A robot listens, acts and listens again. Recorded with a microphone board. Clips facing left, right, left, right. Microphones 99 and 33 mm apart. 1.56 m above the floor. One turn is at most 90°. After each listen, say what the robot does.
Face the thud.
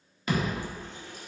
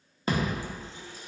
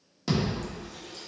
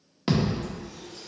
Turn 35° right.
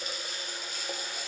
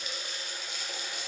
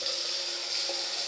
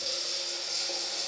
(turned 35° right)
Keep listening.
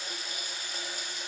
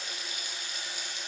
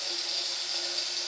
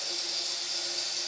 I heard a thud, but can't make it out now. It was about straight ahead or 110° right.